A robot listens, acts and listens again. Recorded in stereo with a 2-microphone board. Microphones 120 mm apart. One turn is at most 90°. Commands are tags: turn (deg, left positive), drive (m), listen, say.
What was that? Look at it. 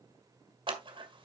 <turn deg="-45"/>
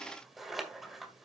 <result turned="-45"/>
<say>Facing the scissors, 1 to 2 m away.</say>